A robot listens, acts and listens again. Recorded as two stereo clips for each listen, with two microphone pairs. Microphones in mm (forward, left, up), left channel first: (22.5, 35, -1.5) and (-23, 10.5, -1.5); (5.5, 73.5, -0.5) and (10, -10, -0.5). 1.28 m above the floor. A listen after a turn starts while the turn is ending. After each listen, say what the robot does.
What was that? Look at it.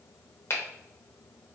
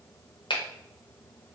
Turn 70° left.
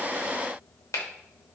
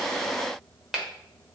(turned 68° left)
Facing the finger snap, under 1 m away.